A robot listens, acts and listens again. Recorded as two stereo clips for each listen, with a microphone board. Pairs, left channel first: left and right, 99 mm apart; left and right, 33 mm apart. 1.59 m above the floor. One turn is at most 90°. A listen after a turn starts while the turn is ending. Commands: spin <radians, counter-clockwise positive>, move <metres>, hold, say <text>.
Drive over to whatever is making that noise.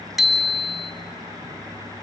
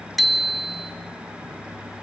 spin 0.52
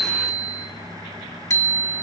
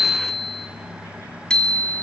spin 1.57
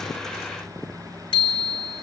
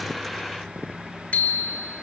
spin 1.05
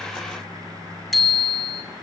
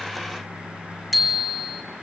move 1.0
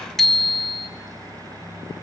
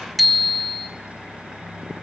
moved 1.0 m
move 1.0
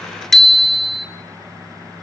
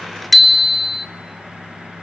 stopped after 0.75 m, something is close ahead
say Arrived at the bicycle bell, straight ahead.